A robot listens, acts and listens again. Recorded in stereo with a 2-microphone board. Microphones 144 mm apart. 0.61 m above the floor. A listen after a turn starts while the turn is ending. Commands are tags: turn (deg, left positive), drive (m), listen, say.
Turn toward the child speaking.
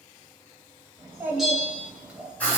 <turn deg="-30"/>
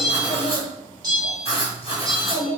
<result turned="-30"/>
<turn deg="50"/>
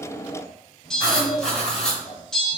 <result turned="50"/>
<turn deg="35"/>
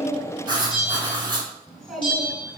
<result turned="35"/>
<say>Found it: a child speaking, straight ahead, 2 to 4 m away.</say>